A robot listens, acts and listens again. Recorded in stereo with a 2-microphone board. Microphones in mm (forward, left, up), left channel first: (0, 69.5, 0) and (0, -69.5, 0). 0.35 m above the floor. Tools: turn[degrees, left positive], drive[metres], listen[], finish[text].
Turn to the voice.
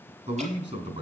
Thought: The man speaking: about 55° right or 125° right.
Action: turn[-55]
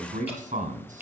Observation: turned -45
Thought: So it is at 75° right.
Action: turn[-75]
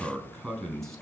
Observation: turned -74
Action: finish[Found it: a man speaking, straight ahead, 2 to 4 m away.]